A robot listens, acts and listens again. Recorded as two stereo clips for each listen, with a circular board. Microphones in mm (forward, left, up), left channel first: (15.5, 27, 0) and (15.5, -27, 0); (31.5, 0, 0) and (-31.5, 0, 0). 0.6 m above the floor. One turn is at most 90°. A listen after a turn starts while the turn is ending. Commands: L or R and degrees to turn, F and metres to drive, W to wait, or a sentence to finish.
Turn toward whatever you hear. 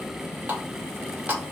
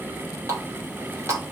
R90
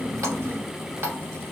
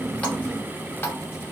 R55
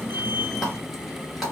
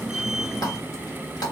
W
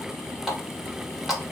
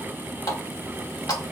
Facing the running tap.